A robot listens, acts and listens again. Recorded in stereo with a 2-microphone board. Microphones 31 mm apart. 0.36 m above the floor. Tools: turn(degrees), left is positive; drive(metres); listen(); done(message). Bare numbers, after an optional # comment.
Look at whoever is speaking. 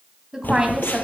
# The woman speaking: about 20° right or 160° right.
turn(-20)
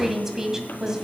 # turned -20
# The woman speaking: about 20° right or 160° right.
turn(-20)
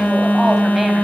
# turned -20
listen()
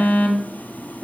listen()
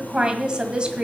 # The woman speaking: about 30° right or 150° right.
turn(-30)
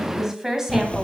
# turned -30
turn(-30)
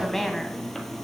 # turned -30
# So it is at 10° left.
turn(10)
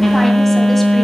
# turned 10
listen()
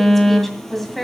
done("Found it: a woman speaking, straight ahead.")